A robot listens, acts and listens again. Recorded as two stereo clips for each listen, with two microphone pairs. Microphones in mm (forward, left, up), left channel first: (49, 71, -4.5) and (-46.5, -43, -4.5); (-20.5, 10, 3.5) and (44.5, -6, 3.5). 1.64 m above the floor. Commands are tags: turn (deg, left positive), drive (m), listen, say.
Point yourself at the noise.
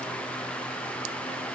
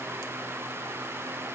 <listen/>
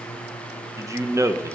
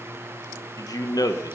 <turn deg="160"/>
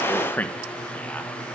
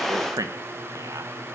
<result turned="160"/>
<turn deg="-30"/>
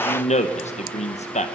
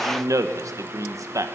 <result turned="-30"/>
<turn deg="15"/>
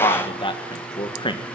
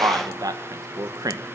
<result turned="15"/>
<say>Facing the man speaking, 1 to 2 m away.</say>